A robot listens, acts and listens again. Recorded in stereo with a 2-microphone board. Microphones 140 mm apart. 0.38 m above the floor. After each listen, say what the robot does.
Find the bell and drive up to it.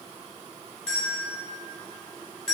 Turn 30° left.
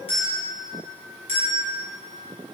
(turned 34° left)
Turn 140° left.
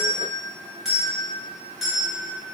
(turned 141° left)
Drive 1.0 m forward.
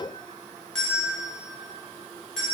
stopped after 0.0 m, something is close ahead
Something is in my way. I am facing the bell but have not reached it.